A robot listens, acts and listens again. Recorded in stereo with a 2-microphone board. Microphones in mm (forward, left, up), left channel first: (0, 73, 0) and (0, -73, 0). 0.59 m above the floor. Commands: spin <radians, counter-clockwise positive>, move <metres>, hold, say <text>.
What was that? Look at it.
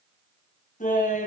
spin 1.13
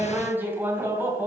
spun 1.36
spin -0.26
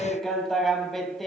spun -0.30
say Facing the laughter.